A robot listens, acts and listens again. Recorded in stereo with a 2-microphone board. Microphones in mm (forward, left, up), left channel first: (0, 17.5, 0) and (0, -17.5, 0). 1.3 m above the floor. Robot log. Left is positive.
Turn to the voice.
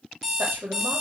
cmd yaw -90
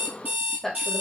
note: So it is at 10° left.
cmd yaw +10
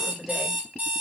end: Facing the woman speaking.